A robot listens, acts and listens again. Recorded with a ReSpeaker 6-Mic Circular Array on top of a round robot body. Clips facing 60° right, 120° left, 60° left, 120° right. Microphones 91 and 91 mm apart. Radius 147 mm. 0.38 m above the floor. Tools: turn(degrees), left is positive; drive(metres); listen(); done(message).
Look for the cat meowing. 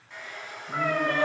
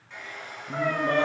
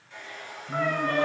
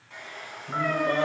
turn(degrees=-45)
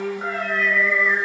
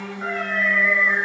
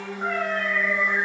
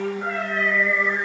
turn(degrees=15)
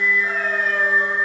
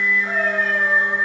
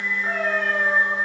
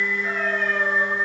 listen()
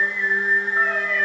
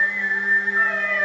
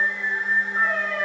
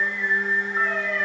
listen()
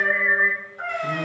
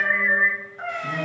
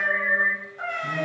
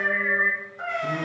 turn(degrees=25)
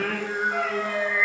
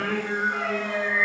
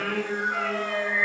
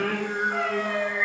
done("Facing the cat meowing, 2 to 4 m away.")